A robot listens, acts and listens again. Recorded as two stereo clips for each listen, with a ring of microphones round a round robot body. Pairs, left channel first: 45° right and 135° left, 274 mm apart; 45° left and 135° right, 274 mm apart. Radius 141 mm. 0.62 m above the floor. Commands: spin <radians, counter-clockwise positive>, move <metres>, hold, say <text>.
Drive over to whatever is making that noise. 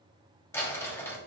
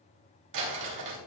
spin -2.18
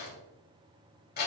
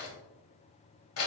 spin 0.17
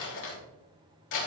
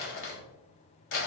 move 1.0
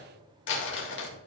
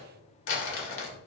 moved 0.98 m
move 1.0
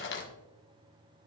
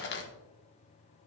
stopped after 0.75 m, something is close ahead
say I am next to the crumpling.